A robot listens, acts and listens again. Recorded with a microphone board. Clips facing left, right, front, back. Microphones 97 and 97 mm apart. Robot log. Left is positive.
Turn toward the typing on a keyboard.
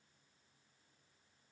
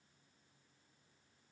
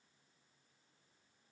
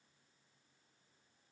cmd idle
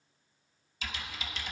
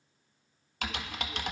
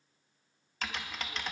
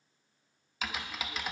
note: The typing on a keyboard: 95° right.
cmd yaw -95
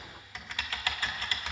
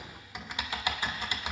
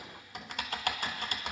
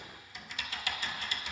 note: The typing on a keyboard is now 20° right.
cmd yaw -20
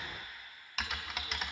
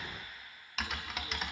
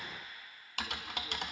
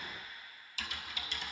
end: Facing the typing on a keyboard, 1 to 2 m away.